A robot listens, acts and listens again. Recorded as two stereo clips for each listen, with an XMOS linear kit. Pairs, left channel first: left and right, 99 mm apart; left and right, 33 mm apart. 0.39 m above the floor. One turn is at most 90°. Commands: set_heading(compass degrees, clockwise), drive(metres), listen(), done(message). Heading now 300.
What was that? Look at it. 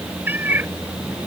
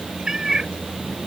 set_heading(320)
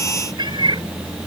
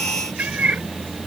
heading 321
set_heading(51)
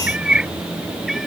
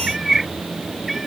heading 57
done("Found it: a cat meowing, straight ahead.")